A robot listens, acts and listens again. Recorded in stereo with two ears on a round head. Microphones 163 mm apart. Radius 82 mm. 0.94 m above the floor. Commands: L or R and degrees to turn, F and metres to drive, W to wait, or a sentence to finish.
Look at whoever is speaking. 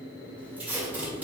W
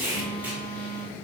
W
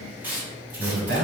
R70
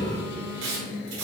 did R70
W
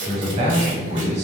R40
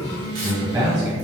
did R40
R20
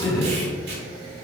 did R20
Facing the man speaking, 1 to 2 m away.